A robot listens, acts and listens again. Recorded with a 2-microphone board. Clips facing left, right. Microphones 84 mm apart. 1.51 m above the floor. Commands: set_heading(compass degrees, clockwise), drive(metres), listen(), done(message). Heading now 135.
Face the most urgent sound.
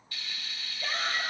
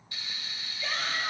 set_heading(85)
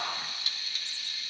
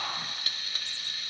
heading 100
set_heading(5)
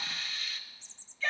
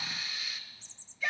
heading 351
set_heading(6)
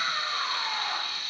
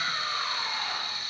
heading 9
done("Found it: a shout, straight ahead.")